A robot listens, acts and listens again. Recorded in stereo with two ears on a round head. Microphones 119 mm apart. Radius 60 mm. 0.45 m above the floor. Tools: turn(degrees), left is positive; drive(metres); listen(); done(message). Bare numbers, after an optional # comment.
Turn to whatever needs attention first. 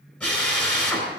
listen()
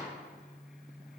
listen()
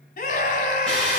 # The scream: about 65° left or 115° left.
turn(65)
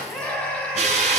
# So it is at 10° left.
turn(10)
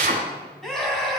done("Found it: a scream, straight ahead, 2 to 4 m away.")